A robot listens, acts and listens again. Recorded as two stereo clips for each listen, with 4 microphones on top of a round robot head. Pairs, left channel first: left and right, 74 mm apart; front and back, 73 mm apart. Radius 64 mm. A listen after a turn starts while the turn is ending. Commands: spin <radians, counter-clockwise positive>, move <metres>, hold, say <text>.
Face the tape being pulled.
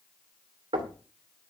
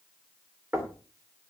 hold
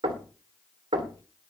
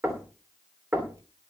hold
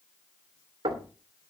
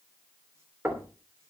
say I can't make out tape being pulled, only knocking.